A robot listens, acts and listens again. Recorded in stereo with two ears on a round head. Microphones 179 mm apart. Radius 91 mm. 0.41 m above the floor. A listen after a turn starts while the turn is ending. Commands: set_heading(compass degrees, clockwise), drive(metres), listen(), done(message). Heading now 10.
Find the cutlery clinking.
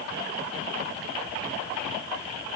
listen()
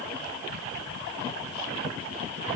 listen()
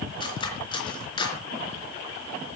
set_heading(345)
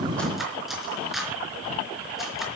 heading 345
done("Facing the cutlery clinking.")